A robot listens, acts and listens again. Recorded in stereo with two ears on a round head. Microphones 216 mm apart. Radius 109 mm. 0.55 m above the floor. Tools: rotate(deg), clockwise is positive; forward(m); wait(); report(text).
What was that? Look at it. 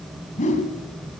rotate(-30)
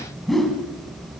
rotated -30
report("Facing the whoosh.")